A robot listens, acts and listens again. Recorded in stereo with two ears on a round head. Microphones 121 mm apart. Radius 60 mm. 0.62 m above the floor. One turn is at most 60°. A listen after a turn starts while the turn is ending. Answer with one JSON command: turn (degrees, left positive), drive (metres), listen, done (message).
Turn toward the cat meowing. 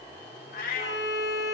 {"turn": 60}
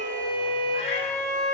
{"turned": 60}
{"listen": true}
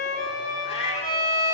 {"turn": 45}
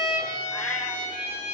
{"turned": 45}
{"listen": true}
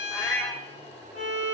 {"turn": 10}
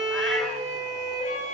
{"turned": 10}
{"listen": true}
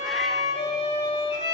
{"listen": true}
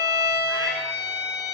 {"done": "Facing where the cat meowing came from. I can't hear it now."}